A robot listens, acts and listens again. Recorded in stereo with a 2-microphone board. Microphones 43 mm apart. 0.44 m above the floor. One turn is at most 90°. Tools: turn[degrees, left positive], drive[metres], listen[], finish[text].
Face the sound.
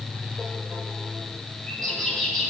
Action: turn[30]
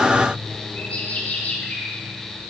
Thought: So it is at 140° left.
Action: turn[90]
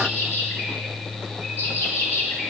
Thought: The bird is now 75° left.
Action: turn[75]
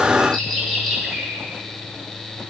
Thought: The bird is now 10° left.
Action: turn[10]
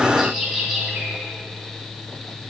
Action: finish[Facing the bird.]